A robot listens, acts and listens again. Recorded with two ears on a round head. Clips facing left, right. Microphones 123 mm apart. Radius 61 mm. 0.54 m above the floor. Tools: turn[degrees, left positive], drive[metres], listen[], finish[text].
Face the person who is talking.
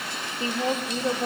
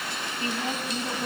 Thought: The woman speaking: about 70° left or 110° left.
Action: turn[70]
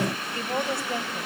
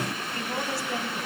Thought: So it is at 20° left.
Action: turn[20]
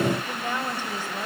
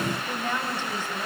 Thought: The woman speaking is now 10° left.
Action: turn[10]
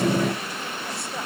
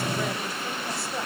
Action: listen[]
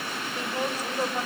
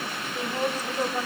Action: finish[Facing the woman speaking.]